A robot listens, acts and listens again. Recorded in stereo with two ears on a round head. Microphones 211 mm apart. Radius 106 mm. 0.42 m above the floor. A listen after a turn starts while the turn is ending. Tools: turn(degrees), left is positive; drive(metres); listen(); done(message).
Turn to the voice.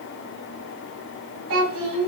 turn(degrees=-65)
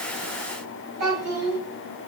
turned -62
turn(degrees=-45)
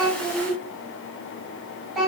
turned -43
done("Found it: a child speaking, straight ahead, 2 to 4 m away.")